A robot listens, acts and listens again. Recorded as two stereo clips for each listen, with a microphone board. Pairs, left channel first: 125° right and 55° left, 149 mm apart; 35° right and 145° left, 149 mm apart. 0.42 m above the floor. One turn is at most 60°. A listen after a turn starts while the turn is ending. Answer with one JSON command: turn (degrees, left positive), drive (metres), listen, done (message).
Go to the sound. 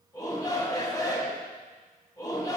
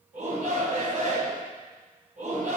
{"turn": 60}
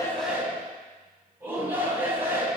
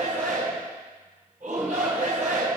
{"turn": 60}
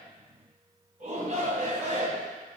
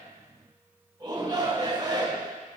{"turn": 60}
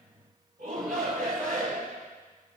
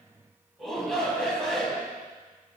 {"turn": 50}
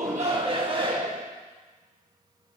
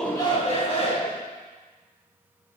{"turn": 10}
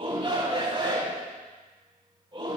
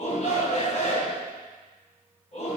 {"drive": 1.0}
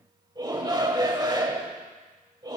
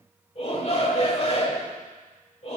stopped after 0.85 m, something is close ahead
{"done": "I am next to the shout."}